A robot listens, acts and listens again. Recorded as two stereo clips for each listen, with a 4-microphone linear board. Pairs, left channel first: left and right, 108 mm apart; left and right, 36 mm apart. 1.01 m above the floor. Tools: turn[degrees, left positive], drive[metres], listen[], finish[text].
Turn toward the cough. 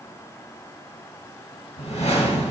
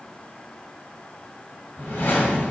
Action: listen[]
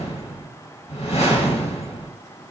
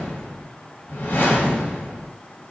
Action: listen[]
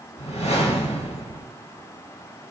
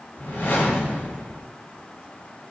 Action: finish[I can't make out a cough to turn to.]